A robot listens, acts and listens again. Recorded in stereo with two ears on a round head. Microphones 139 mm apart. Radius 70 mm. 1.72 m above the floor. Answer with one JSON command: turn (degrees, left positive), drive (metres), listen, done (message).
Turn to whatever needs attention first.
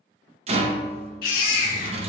{"turn": 65}
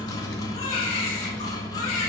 {"turn": 45}
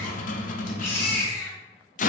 {"turn": 15}
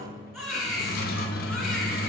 {"done": "Found it: a baby crying, straight ahead, 1 to 2 m away."}